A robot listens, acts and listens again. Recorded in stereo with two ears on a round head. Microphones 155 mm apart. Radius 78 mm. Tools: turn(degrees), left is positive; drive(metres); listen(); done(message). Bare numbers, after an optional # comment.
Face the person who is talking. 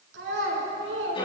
turn(-90)
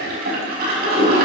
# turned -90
listen()
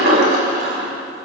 listen()
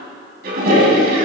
done("Facing where the child speaking came from. I can't hear it now.")